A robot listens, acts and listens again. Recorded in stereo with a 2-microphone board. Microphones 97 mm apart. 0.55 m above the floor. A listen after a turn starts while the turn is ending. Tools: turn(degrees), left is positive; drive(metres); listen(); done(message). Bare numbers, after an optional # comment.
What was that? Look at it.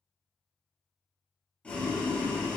turn(30)
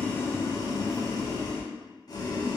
# So it is at 135° left.
turn(135)
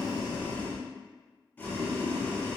# The boiling is now 20° left.
turn(20)
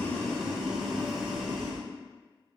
done("Facing the boiling, 1 to 2 m away.")